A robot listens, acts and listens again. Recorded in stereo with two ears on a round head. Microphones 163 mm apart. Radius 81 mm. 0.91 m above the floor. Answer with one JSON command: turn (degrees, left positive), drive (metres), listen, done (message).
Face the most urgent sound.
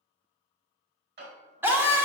{"turn": -30}
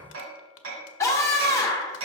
{"turn": 15}
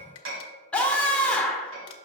{"done": "Facing the scream."}